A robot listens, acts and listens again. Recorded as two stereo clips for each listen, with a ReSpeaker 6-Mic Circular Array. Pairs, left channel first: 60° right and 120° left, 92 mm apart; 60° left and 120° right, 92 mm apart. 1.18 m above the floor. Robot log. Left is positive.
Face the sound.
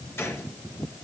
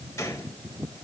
end: Facing the gunshot.